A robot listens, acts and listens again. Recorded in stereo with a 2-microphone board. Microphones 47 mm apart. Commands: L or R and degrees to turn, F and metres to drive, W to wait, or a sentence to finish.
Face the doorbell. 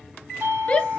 R60
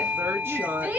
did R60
R35
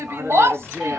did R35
W
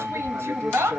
Facing the doorbell.